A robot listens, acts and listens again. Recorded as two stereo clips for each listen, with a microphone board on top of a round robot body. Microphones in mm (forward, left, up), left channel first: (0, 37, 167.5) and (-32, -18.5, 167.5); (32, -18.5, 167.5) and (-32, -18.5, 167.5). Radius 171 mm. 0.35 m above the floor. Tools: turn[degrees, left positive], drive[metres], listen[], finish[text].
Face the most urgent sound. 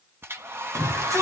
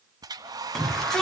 Thought: The shout: 85° right.
Action: turn[-85]
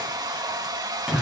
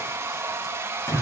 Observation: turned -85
Thought: The shout is now 40° right.
Action: turn[-40]
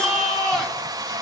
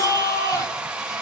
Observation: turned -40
Thought: The shout is now 15° right.
Action: turn[-15]
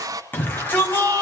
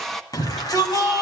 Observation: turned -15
Action: finish[Found it: a shout, straight ahead, over 4 m away.]